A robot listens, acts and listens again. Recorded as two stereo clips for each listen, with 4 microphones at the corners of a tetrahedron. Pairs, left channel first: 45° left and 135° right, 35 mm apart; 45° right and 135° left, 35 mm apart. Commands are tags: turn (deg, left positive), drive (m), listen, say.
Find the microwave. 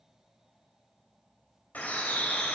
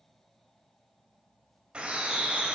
<listen/>
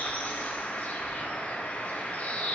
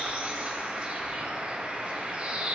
<listen/>
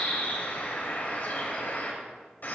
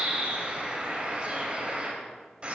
<say>I can't make out a microwave to turn to.</say>